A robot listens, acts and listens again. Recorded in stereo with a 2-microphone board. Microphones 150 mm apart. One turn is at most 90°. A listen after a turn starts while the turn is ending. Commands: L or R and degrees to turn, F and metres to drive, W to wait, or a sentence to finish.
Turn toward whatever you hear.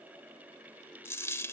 L20
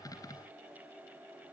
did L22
W
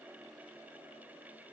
I heard a dropped coin, but can't make it out now. It was about 5° right or 140° left.